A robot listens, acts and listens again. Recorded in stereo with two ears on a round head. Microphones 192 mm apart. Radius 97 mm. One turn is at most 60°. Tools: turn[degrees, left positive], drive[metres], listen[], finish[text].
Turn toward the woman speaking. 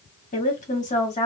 Thought: The woman speaking: about 30° left or 150° left.
Action: turn[30]
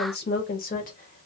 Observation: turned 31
Thought: The woman speaking: about 40° left or 140° left.
Action: turn[40]
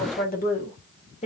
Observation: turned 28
Thought: The woman speaking: about 30° left or 150° left.
Action: turn[30]
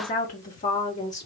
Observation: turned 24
Thought: The woman speaking: about 30° left or 150° left.
Action: turn[30]
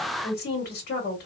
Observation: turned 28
Thought: So it is at 130° left.
Action: turn[60]
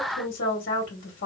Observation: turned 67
Thought: The woman speaking is now 45° left.
Action: turn[45]
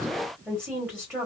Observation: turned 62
Thought: The woman speaking is now 10° right.
Action: turn[-10]
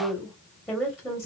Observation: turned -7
Action: finish[Facing the woman speaking, 1 to 2 m away.]